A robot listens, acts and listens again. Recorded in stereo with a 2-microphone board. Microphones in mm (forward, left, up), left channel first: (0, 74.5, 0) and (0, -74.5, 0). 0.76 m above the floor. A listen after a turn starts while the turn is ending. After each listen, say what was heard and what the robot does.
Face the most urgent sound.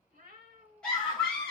Turn 30° left.
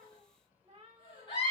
So it is at 145° left. Turn 145° left.
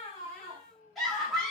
Facing the scream, 1 to 2 m away.